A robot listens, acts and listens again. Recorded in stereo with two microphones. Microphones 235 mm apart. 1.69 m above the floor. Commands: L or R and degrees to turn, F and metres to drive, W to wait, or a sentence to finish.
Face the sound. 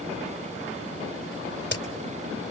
L50
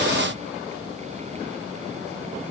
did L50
W
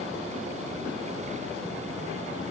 I heard a crack, but can't make it out now. It was about straight ahead or 80° left.